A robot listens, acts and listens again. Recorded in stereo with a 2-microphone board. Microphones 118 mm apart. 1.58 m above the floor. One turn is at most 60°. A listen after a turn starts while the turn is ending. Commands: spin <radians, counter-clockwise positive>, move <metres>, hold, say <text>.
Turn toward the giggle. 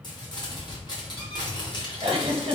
spin -0.87
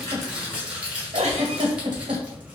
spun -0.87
spin -1.05
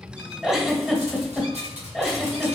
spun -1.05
say Found it: a giggle, straight ahead.